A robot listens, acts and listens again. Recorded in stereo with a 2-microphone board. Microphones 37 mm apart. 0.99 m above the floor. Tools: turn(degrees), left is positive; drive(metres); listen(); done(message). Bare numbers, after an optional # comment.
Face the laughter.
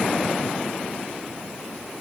listen()
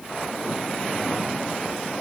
listen()
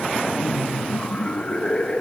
# The laughter: about 30° left or 150° left.
turn(30)
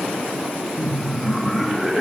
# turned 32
done("Facing the laughter.")